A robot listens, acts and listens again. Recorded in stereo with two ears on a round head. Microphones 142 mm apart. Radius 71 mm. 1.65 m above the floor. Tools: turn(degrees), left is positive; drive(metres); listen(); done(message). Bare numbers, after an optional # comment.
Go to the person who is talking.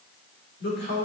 turn(90)
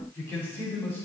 # So it is at 15° left.
turn(15)
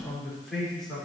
drive(1.0)
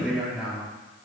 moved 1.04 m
drive(1.0)
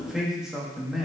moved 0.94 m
drive(1.0)
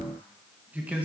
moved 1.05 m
# The man speaking is now 10° right.
turn(-10)
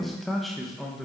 drive(1.0)
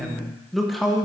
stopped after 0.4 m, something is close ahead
done("I am next to the man speaking.")